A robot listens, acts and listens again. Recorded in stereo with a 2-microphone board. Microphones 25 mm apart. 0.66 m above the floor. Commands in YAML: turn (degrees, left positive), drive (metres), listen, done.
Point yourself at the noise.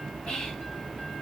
turn: 35
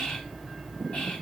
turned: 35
turn: 100
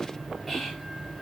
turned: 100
turn: 10
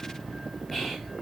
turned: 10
done: "Found it: whispering, straight ahead."